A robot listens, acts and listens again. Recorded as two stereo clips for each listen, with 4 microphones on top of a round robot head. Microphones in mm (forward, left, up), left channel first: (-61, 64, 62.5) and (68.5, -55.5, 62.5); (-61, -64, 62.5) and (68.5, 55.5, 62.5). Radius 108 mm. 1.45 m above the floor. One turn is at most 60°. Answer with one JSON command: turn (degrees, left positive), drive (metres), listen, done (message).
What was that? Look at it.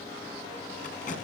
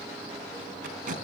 {"turn": 60}
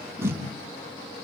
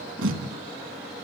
{"turn": 35}
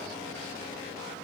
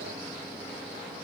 {"listen": true}
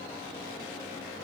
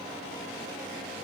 {"listen": true}
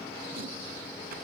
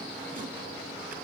{"done": "I heard tape being pulled from this way, but can't make it out now."}